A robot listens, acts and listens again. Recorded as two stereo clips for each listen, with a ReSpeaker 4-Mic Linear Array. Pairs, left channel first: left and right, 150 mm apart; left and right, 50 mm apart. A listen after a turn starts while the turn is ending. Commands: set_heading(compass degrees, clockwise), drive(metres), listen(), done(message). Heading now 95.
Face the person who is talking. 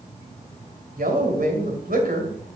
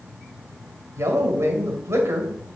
set_heading(160)
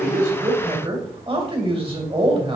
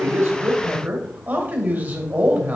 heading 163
set_heading(203)
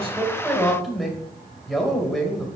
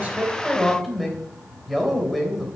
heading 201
done("Found it: a man speaking, straight ahead.")